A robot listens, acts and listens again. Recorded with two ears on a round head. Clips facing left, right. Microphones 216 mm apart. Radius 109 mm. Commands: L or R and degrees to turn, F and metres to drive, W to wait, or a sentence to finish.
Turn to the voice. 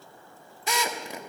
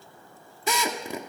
W
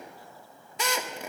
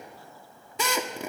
W
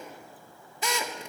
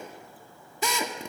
I can't make out anyone speaking, only a drill.